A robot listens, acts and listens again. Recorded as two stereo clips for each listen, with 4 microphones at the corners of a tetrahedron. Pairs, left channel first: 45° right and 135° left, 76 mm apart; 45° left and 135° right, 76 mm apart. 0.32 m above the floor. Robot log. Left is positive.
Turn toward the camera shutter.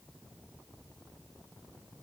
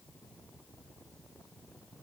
cmd idle
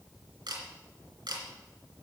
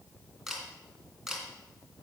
note: The camera shutter: 140° left.
cmd yaw +140
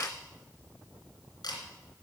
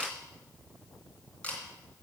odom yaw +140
note: The camera shutter is now 25° right.
cmd yaw -25
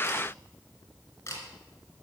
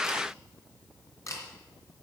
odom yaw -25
end: Found it: a camera shutter, straight ahead, 2 to 4 m away.